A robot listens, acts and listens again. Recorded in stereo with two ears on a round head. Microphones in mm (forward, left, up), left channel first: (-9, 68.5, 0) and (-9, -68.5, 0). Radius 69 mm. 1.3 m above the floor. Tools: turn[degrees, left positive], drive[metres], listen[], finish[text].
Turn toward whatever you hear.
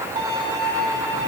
Thought: The violin: about 30° right or 150° right.
Action: turn[-30]
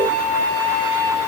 Thought: So it is at 125° right.
Action: turn[-125]
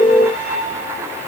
Thought: The violin is now 10° right.
Action: turn[-10]
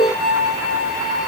Action: finish[Facing the violin, 1 to 2 m away.]